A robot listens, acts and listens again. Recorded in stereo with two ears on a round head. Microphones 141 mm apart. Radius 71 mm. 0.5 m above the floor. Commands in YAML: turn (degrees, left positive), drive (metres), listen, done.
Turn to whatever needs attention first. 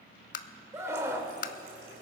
turn: -20
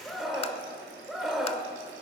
done: "Facing the scream, 1 to 2 m away."